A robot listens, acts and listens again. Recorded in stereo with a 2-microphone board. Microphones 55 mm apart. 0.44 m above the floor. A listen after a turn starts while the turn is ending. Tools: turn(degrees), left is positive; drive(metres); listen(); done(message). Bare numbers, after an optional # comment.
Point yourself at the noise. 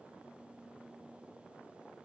listen()
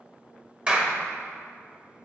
# The clap: about 25° right or 155° right.
turn(-25)
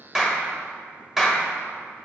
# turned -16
# So it is at 10° right.
turn(-10)
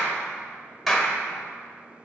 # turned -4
done("Found it: a clap, straight ahead, 1 to 2 m away.")